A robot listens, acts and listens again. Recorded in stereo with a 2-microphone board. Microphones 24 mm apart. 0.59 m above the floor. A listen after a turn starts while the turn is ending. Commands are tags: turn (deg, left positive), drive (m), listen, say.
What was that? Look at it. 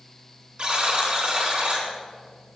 <turn deg="-45"/>
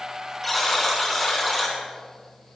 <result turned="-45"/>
<say>Facing the buzzer.</say>